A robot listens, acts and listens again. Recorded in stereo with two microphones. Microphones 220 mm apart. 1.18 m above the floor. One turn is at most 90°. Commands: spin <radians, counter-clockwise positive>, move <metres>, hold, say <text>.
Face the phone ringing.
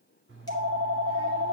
spin -1.05
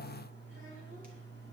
spin -1.05
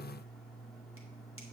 say Facing the phone ringing, 1 to 2 m away.